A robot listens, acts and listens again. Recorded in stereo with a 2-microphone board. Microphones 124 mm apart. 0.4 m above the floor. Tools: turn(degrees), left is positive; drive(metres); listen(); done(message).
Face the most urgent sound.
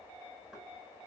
listen()
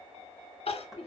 turn(degrees=55)
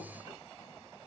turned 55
listen()
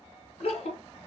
turn(degrees=65)
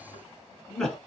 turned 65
done("Found it: crying, straight ahead.")